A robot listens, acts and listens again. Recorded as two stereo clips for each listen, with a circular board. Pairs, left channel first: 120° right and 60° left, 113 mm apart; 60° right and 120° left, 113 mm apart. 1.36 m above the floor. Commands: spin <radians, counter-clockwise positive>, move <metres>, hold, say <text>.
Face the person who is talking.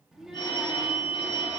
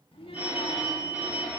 spin -0.44
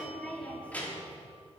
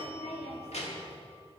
spin -0.79
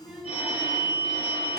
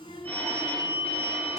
spin -0.44
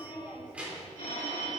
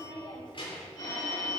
spin -0.35
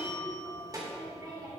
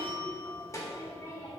say Found it: a child speaking, straight ahead.